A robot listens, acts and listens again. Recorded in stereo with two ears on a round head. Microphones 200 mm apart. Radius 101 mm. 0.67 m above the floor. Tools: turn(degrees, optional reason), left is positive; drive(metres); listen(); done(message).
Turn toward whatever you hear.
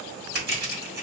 turn(degrees=-50, reason="The crushing: about 50° right or 130° right.")
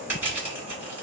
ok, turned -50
turn(degrees=-10, reason="So it is at 10° right.")
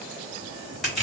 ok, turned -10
done("Found it: crushing, straight ahead.")